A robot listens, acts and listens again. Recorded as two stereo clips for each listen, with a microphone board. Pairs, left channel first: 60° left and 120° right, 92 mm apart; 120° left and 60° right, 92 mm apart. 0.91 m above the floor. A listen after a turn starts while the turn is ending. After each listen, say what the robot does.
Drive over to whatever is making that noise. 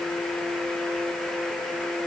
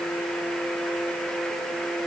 Keep listening.
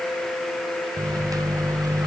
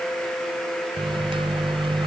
Turn 70° right.
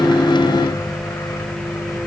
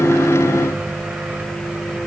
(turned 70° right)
Turn 10° left.
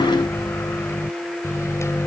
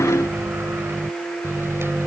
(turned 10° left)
Drive 1.0 m forward.
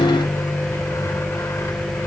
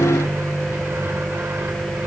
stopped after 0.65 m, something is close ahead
Something is in my way. I am facing the microwave but have not reached it.